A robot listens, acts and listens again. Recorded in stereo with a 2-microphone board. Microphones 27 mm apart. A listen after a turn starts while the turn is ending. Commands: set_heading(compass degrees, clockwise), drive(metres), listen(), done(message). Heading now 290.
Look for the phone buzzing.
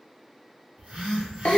set_heading(325)
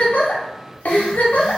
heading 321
listen()
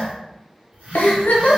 set_heading(66)
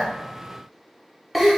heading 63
listen()
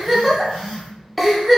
done("Facing the phone buzzing.")